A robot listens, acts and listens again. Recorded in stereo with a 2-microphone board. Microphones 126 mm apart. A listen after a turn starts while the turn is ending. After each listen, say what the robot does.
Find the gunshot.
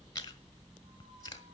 Keep listening.
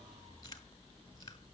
Keep listening.
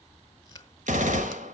Turn 90° right.
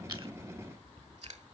Facing where the gunshot came from. I can't hear it now.